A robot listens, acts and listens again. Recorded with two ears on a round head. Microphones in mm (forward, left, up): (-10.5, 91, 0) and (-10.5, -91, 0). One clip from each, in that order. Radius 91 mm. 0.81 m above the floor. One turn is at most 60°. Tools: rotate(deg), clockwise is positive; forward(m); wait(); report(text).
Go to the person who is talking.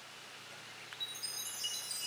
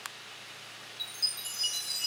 wait()
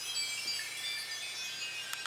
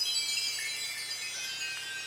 wait()
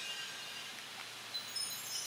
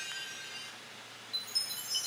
report("I can't make out anyone speaking, only a chime.")